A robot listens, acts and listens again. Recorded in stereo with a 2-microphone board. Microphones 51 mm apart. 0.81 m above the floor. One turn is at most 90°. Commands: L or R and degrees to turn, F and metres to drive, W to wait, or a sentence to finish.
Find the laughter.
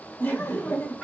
L50
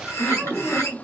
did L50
L30
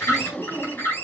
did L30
L10
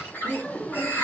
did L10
L20
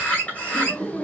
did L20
L15
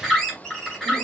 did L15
W
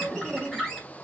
Found it: laughter, straight ahead.